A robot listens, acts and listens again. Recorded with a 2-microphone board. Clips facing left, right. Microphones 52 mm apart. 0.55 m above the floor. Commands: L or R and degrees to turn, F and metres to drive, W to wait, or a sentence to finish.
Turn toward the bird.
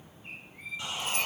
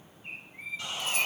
R25
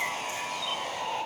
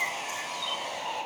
W
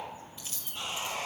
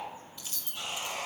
W
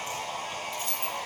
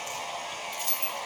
I heard a bird, but can't make it out now. It was about straight ahead or 130° right.